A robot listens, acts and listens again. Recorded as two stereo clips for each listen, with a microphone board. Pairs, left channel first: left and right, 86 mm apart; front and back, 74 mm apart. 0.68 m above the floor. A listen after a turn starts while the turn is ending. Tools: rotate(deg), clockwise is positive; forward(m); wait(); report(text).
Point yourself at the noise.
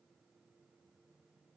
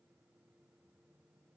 wait()
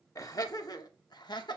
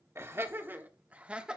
rotate(-105)
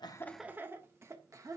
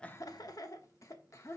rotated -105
rotate(45)
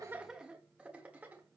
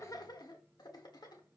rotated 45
rotate(20)
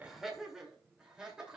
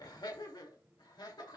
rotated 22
rotate(10)
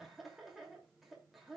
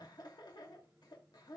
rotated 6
report("Found it: laughter, straight ahead.")